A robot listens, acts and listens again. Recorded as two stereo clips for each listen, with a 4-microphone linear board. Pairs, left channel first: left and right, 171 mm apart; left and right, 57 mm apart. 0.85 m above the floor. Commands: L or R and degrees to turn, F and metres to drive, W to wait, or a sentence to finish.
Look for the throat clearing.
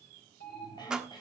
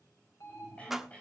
L25
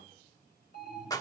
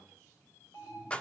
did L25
W
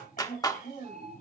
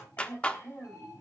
L130
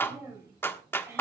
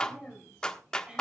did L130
R15
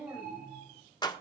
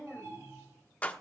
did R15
Facing the throat clearing.